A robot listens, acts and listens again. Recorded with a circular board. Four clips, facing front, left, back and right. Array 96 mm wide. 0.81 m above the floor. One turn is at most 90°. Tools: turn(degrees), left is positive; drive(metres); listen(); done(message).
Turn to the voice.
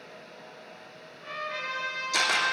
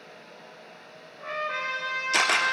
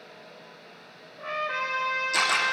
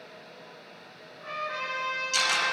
listen()
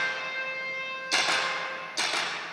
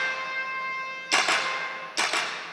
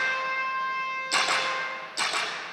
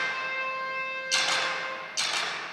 listen()
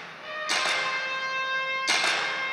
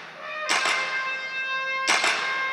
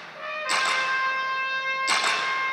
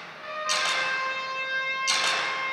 done("I can't make out anyone speaking to turn to.")